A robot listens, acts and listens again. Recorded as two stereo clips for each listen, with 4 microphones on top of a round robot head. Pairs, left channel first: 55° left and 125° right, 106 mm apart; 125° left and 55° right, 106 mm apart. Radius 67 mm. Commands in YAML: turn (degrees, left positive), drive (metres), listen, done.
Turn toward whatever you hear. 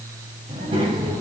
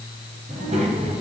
turn: -75
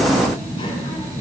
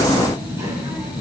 turn: 10
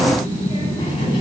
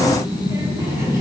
turn: 10
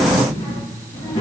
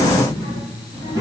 done: "Found it: a child speaking, straight ahead, over 4 m away."